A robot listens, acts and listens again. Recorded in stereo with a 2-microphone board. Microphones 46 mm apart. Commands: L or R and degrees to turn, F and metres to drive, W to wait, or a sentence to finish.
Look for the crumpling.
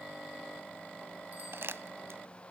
R60
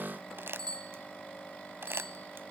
R60
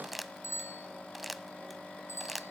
Found it: crumpling, straight ahead, under 1 m away.